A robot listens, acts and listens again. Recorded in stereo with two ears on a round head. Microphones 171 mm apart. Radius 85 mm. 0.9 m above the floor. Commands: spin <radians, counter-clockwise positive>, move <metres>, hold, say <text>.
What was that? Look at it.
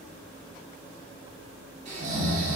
spin -0.61
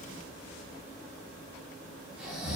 say Found it: snoring, straight ahead.